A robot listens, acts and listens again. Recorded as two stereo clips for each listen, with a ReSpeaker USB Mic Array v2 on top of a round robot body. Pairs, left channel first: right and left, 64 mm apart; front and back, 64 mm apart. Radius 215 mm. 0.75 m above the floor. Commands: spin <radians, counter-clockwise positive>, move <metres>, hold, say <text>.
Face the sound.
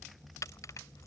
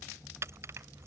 spin -2.27
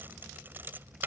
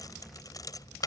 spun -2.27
spin 0.52
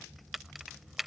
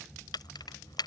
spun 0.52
say Found it: keys jangling, straight ahead.